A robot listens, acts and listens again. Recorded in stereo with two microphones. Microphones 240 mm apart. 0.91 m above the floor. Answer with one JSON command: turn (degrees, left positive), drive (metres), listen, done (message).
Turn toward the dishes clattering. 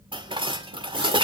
{"turn": -20}
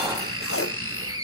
{"listen": true}
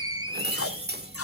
{"turn": -140}
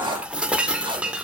{"done": "Facing the dishes clattering."}